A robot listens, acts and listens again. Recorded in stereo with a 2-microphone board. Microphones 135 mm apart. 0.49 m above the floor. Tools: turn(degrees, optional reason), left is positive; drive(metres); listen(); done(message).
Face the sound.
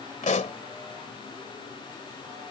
turn(degrees=60, reason="The pop: about 60° left or 120° left.")
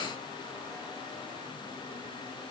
listen()
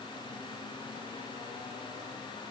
done("I heard a pop, but can't make it out now. It was about straight ahead or 60° left.")